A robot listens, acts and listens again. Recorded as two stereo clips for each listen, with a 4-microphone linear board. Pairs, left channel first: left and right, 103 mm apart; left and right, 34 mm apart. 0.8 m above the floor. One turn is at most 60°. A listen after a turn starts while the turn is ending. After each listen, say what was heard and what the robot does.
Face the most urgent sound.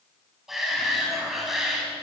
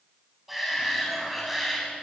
Turn 30° right.
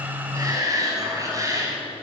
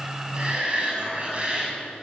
So it is at 145° right. Turn 60° right.
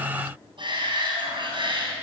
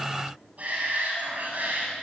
The shout is now 130° right. Turn 60° right.
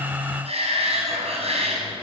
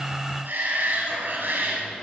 The shout is now 80° right. Turn 60° right.
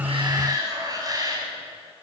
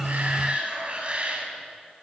The shout is now 35° right. Turn 35° right.
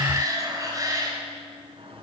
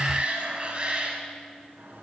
The shout is now 35° right. Turn 35° right.
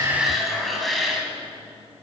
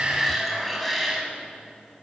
Facing the shout, over 4 m away.